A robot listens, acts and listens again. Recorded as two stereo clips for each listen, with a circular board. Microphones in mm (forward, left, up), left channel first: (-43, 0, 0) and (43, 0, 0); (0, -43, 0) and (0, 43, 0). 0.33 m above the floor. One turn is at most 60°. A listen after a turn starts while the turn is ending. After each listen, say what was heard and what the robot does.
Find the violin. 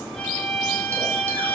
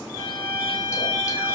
The violin: 105° left. Turn 60° left.
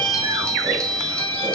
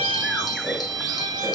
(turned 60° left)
The violin is now 50° left. Turn 50° left.
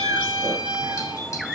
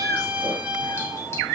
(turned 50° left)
The violin is now 15° left. Turn 15° left.
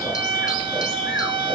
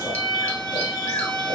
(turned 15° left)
Facing the violin.